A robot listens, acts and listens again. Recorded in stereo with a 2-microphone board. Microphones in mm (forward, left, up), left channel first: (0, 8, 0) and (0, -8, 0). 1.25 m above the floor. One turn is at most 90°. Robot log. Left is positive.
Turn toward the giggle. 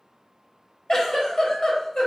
note: The giggle: about 55° left or 125° left.
cmd yaw +55
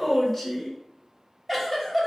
note: So it is at 25° left.
cmd yaw +25
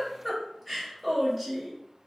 end: Found it: a giggle, straight ahead.